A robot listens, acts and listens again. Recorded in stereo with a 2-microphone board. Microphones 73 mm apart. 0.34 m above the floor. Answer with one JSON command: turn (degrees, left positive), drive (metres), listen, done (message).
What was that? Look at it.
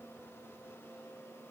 {"listen": true}
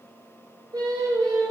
{"turn": -60}
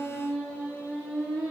{"done": "Found it: singing, straight ahead."}